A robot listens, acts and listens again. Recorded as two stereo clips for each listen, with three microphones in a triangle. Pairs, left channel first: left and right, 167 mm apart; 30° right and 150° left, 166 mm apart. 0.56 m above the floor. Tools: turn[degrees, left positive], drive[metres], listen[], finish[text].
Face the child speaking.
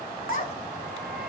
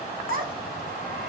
Thought: The child speaking: 125° left.
Action: turn[125]
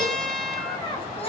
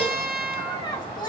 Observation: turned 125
Thought: The child speaking is now 35° left.
Action: turn[35]
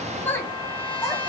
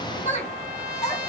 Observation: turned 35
Thought: The child speaking is now 20° left.
Action: turn[20]
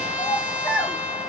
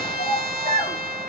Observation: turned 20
Thought: The child speaking is now 10° left.
Action: turn[10]
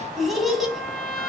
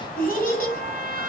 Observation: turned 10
Action: finish[Facing the child speaking.]